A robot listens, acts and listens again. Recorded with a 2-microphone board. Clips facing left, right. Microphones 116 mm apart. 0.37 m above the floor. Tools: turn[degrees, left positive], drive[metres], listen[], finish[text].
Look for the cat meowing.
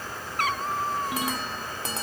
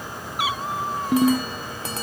Action: turn[-30]
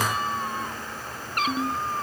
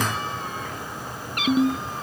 Thought: So it is at 40° left.
Action: turn[40]
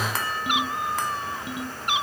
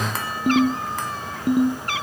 Thought: The cat meowing is now 20° left.
Action: turn[20]
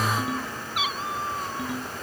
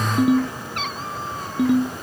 Action: finish[Facing the cat meowing.]